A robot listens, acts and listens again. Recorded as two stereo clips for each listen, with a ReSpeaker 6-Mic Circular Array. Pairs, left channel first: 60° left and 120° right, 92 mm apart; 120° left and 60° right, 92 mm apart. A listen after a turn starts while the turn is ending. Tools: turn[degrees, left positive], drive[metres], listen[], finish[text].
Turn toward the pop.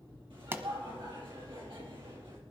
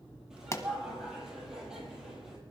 Thought: The pop: 175° left.
Action: turn[175]
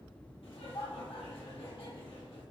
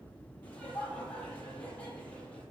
Action: finish[I heard a pop from this way, but can't make it out now.]